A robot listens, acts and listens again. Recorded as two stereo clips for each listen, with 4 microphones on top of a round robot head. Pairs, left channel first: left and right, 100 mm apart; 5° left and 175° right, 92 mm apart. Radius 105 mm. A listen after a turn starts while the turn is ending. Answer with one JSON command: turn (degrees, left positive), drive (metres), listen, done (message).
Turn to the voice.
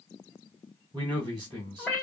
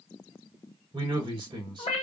{"turn": -140}
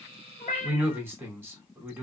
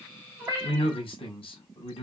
{"turn": -20}
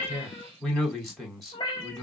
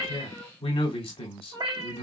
{"done": "Facing the man speaking, 2 to 4 m away."}